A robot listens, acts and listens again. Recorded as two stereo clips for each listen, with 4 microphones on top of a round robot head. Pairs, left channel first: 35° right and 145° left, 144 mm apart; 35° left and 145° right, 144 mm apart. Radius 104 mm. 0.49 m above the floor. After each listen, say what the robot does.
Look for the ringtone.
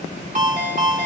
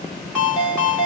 Turn 125° left.
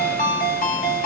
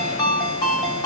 Turn 25° right.
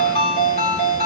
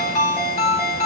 Facing the ringtone, 1 to 2 m away.